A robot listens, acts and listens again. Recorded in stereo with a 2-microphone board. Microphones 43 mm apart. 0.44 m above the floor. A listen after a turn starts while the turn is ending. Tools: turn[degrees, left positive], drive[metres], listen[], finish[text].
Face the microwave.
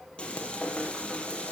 Action: listen[]
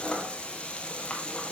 Action: listen[]
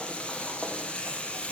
Action: finish[I can't make out a microwave to turn to.]